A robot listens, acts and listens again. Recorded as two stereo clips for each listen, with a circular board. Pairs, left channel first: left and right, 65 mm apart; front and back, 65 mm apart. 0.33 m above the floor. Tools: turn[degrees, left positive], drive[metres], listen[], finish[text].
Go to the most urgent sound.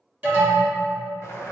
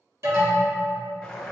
Thought: The alarm: 150° right.
Action: turn[-150]
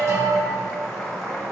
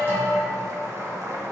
Thought: The alarm is now 55° right.
Action: turn[-55]
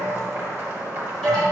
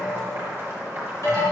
Action: drive[1.0]
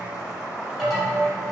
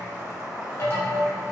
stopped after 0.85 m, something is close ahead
Action: finish[I am next to the alarm.]